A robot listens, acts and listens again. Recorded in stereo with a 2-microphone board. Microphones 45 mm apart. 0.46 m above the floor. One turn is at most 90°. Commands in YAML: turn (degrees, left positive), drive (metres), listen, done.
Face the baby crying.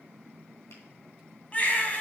turn: 35
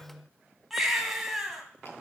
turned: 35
done: "Facing the baby crying, 2 to 4 m away."